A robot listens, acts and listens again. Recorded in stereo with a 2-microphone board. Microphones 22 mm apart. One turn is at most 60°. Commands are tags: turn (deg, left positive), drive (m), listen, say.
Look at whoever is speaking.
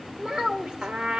<turn deg="-35"/>
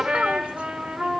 <listen/>
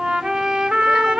<listen/>
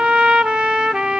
<say>I heard a child speaking, but can't make it out now. It was about straight ahead or 110° right.</say>